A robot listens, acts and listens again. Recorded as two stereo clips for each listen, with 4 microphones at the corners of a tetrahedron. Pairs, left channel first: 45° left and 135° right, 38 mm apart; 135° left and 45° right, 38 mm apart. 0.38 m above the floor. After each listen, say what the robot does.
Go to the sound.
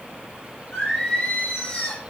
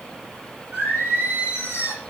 Turn 25° right.
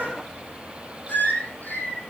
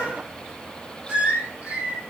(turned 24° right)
Drive 1.0 m forward.
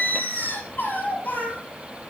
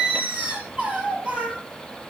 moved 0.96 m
Drive 1.0 m forward.
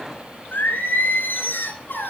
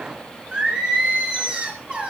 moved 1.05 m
Turn 20° left.
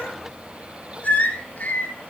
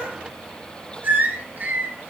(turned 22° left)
Drive 1.0 m forward.
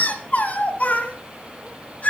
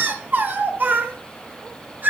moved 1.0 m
Drive 1.0 m forward.
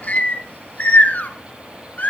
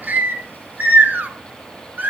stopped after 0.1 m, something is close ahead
I am next to the singing.